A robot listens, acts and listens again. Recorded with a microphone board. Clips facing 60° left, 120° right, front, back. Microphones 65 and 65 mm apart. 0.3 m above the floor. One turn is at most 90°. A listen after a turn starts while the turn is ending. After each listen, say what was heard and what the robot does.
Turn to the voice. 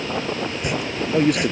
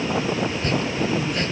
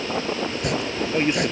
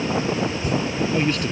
The man speaking: 70° left. Turn 70° left.
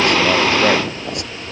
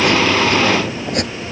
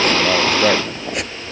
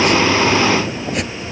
Keep listening.
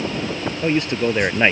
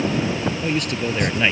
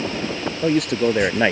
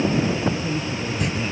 Found it: a man speaking, straight ahead.